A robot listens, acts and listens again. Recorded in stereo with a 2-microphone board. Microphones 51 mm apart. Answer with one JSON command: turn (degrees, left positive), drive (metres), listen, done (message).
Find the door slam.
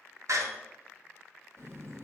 {"turn": -70}
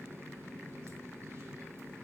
{"listen": true}
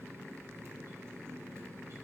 {"done": "I heard a door slam, but can't make it out now. It was about straight ahead or 40° right."}